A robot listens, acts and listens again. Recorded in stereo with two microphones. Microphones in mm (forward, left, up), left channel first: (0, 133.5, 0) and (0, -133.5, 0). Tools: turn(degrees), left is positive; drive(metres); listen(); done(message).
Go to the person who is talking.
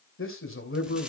turn(degrees=55)
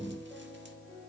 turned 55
listen()
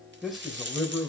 drive(metres=1.0)
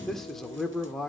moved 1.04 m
drive(metres=1.0)
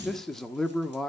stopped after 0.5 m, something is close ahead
done("I am next to the man speaking.")